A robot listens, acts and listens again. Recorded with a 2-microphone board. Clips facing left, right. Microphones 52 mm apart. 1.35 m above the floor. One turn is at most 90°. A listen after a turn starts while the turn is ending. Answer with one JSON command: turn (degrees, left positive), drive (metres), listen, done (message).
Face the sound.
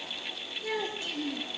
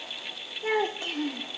{"turn": -45}
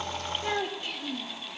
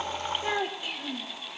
{"turn": -15}
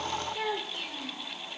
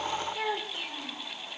{"done": "Found it: a child speaking, straight ahead."}